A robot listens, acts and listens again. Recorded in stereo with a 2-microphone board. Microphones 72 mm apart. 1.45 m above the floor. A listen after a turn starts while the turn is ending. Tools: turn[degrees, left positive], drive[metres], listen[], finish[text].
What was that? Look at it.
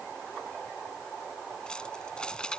Action: turn[30]
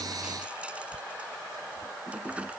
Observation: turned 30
Thought: So it is at 20° right.
Action: turn[-20]
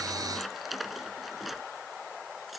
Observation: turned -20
Action: finish[Found it: keys jangling, straight ahead.]